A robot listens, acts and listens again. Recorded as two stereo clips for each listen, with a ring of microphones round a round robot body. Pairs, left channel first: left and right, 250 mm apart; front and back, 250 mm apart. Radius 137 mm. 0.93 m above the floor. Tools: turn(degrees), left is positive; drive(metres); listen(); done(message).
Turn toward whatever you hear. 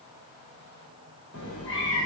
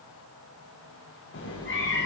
turn(degrees=40)
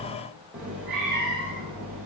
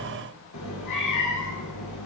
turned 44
done("Found it: a cat meowing, straight ahead, over 4 m away.")